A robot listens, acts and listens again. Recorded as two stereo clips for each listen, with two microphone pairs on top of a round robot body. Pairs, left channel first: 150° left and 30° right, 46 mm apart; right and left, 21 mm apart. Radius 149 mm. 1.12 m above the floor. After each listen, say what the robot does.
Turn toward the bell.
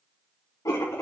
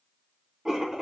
Keep listening.
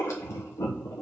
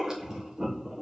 Keep listening.
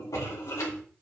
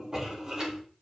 I can't make out a bell to turn to.